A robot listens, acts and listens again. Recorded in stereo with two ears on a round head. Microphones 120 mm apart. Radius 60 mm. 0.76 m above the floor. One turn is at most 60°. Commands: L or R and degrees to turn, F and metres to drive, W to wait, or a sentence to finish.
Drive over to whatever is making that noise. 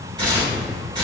R35
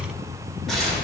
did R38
F1.0
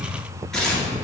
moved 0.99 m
F1.0
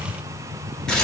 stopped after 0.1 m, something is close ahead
I am next to the tearing paper.